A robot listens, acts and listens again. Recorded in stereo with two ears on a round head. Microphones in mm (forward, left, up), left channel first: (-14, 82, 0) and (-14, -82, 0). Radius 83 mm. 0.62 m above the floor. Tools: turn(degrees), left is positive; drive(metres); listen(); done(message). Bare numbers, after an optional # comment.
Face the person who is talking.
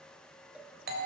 listen()
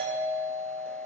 listen()
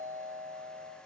done("I can't make out anyone speaking, only a doorbell and a cowbell.")